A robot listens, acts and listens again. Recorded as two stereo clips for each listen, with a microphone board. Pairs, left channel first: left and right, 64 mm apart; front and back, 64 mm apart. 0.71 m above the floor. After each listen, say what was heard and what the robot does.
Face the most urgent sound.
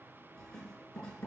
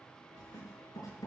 Keep listening.
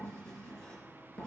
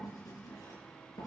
Keep listening.
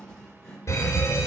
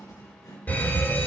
The fire alarm: 60° left. Turn 60° left.
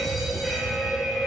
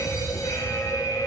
Facing the fire alarm.